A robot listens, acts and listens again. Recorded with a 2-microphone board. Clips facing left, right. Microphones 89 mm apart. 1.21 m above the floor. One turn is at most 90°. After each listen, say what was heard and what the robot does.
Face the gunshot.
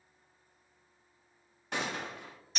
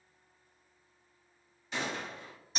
The gunshot: about 60° left or 120° left. Turn 60° left.
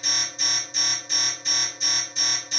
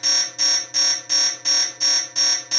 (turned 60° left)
Keep listening.
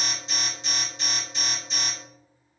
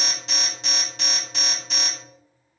I heard a gunshot, but can't make it out now. It was about straight ahead or 60° left.